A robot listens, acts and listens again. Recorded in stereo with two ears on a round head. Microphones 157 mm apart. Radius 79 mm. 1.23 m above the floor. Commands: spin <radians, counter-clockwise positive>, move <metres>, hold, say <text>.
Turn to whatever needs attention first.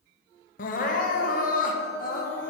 spin 0.87
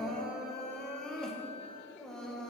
say Found it: crying, straight ahead.